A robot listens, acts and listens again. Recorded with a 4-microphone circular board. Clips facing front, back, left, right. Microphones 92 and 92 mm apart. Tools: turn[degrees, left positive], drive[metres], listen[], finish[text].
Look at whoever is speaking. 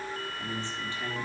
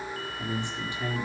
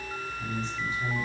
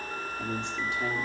Thought: The man speaking: 105° right.
Action: turn[-105]
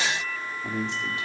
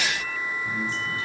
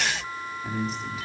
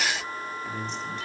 Action: finish[Found it: a man speaking, straight ahead, 2 to 4 m away.]